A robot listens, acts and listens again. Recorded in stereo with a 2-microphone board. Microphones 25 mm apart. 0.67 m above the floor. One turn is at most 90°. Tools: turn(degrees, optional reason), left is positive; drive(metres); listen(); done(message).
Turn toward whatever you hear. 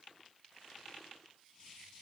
listen()
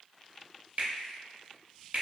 turn(degrees=-60, reason="The finger snap: about 60° right or 120° right.")
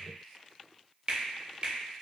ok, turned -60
turn(degrees=-40, reason="So it is at 40° right.")
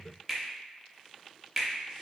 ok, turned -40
done("Facing the finger snap.")